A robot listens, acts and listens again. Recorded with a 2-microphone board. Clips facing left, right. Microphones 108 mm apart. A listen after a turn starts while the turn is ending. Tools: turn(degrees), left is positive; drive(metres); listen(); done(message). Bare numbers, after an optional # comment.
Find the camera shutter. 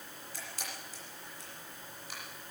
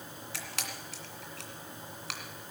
turn(-90)
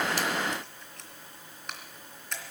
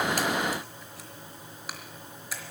done("Facing the camera shutter, 2 to 4 m away.")